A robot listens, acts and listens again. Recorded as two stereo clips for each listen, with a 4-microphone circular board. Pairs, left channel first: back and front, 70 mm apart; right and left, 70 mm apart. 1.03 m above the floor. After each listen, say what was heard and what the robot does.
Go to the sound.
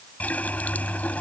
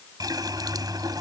The running tap: 110° left. Turn 110° left.
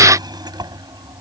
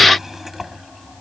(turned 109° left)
Drive 1.0 m forward.
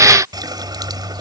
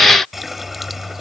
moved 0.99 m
Drive 1.0 m forward.
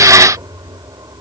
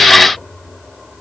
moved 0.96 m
Drive 1.0 m forward.
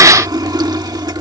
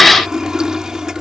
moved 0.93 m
The running tap is now 10° left. Turn 10° left.
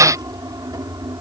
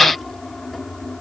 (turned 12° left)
Drive 1.0 m forward.
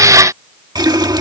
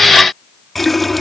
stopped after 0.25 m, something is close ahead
I am next to the running tap.